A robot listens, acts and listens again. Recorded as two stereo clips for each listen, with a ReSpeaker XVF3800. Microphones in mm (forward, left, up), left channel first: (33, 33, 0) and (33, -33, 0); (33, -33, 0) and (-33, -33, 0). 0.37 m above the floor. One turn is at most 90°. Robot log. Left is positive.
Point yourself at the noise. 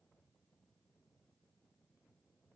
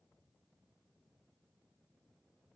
cmd idle
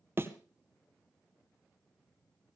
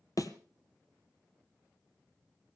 note: The thud: 35° right.
cmd yaw -35
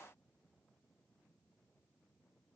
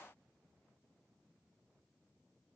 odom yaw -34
end: Facing where the thud came from. I can't hear it now.